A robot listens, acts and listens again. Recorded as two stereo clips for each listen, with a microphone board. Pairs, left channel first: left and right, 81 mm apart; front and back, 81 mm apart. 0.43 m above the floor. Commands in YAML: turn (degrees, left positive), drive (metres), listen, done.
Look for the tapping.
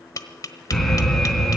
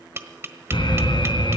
turn: 125
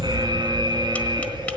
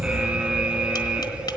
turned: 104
turn: 20
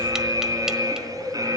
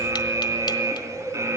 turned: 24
listen: true
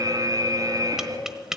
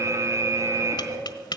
turn: -10
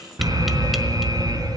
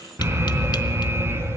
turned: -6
listen: true
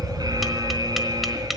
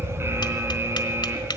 listen: true
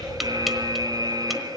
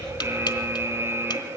done: "Facing where the tapping came from. I can't hear it now."